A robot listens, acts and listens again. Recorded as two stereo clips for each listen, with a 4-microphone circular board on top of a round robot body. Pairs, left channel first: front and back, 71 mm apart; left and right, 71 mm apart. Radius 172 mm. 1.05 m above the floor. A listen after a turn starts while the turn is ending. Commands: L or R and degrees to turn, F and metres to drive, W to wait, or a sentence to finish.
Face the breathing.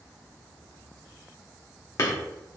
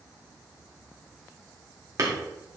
W
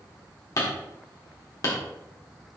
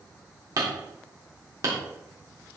W
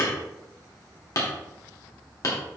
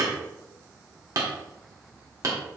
I can't make out breathing, only hammering.